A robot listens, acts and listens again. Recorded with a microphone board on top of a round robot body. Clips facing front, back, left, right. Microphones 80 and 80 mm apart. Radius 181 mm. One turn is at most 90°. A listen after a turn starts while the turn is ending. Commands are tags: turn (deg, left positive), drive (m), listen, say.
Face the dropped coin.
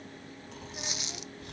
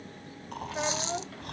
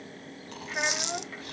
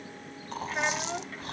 <turn deg="90"/>
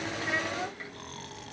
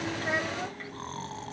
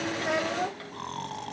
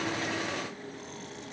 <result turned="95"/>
<turn deg="25"/>
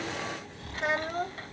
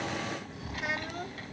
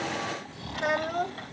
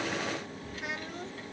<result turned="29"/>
<say>Facing where the dropped coin came from. I can't hear it now.</say>